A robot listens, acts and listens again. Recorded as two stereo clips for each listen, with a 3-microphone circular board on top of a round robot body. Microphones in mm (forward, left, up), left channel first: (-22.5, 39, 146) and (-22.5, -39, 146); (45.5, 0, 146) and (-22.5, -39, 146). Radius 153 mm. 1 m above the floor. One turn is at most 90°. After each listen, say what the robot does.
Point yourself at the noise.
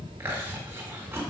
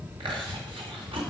Turn 90° right.
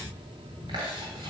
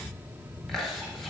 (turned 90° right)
Turn 60° right.
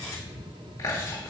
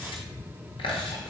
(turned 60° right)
Turn 30° left.
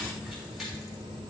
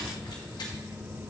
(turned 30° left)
Keep listening.
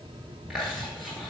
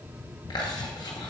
Found it: chewing, straight ahead.